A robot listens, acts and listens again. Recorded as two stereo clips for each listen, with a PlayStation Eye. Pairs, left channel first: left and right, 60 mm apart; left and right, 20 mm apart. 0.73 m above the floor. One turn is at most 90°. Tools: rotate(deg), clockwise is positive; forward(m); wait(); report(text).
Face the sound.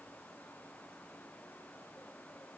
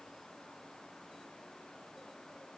wait()
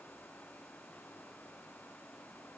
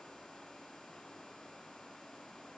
wait()
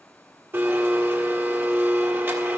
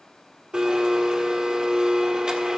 rotate(40)
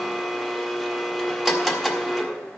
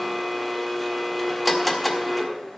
report("Found it: a blender, straight ahead, 1 to 2 m away.")